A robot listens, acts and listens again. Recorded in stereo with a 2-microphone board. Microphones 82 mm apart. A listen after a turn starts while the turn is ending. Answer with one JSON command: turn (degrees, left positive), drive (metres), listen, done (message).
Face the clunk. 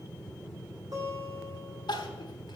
{"listen": true}
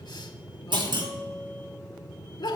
{"turn": -75}
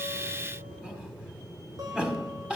{"listen": true}
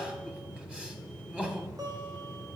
{"done": "I heard a clunk, but can't make it out now. It was about straight ahead or 30° right."}